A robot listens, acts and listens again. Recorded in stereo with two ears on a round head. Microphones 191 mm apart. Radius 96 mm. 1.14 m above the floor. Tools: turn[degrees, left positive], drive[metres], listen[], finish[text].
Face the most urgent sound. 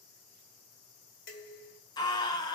Thought: The scream: about 20° left or 160° left.
Action: turn[20]
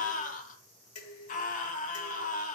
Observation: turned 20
Thought: So it is at 140° left.
Action: turn[140]
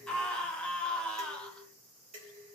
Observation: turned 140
Action: finish[Facing the scream, 1 to 2 m away.]